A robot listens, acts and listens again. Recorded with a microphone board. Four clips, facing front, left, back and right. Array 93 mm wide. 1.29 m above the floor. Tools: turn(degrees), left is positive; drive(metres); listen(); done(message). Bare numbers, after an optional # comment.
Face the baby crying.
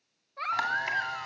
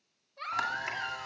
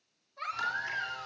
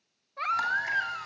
# The baby crying: 65° right.
turn(-65)
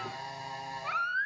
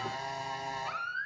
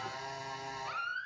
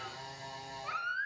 done("Facing the baby crying, 1 to 2 m away.")